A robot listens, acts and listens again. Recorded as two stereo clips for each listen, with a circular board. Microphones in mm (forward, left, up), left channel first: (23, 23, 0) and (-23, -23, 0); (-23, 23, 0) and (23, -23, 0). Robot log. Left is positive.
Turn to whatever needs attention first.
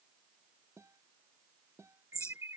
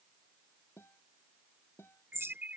note: The alarm: 105° right.
cmd yaw -105
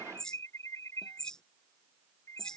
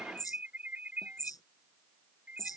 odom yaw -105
note: The alarm is now 15° left.
cmd yaw +15
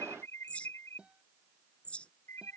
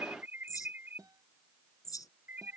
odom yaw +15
note: The alarm is now 10° left.
cmd yaw +10
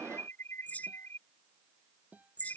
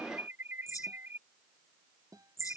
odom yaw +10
end: Found it: an alarm, straight ahead.